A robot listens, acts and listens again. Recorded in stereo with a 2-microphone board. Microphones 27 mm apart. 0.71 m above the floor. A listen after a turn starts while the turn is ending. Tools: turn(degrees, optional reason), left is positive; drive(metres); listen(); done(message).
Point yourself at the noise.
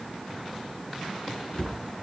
turn(degrees=45, reason="The cupboard door: about 45° left or 135° left.")
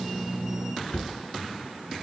turn(degrees=90, reason="So it is at 90° left.")
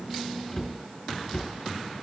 turn(degrees=20, reason="The cupboard door is now 20° left.")
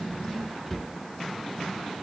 turn(degrees=-10, reason="The cupboard door is now 10° right.")
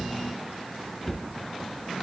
done("Facing the cupboard door, 2 to 4 m away.")